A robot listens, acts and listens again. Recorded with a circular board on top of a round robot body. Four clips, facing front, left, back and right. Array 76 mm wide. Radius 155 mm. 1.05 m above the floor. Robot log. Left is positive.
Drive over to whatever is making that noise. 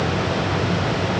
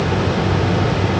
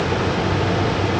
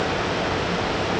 cmd idle
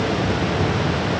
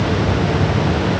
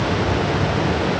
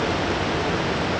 cmd idle
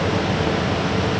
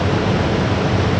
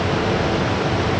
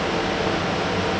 end: I can't make out anything.